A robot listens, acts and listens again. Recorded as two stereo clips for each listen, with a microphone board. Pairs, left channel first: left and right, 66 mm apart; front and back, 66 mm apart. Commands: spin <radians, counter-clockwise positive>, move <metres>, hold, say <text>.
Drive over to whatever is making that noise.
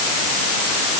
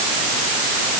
hold
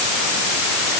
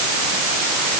hold
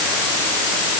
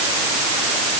say I can't make out anything.